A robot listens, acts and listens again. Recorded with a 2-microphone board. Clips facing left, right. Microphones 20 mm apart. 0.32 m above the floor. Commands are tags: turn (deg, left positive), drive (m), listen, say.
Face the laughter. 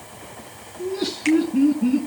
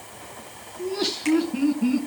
<turn deg="-65"/>
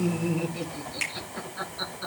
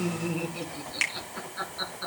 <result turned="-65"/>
<turn deg="-15"/>
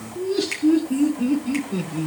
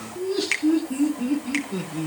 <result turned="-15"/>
<say>Found it: laughter, straight ahead.</say>